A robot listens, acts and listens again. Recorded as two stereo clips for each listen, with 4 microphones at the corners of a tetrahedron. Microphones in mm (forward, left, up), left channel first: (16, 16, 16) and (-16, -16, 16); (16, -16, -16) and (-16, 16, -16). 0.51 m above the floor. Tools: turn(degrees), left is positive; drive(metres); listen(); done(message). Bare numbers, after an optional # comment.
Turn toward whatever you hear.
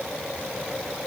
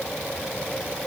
listen()
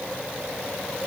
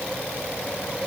listen()
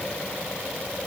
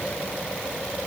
done("I can't make out anything to turn to.")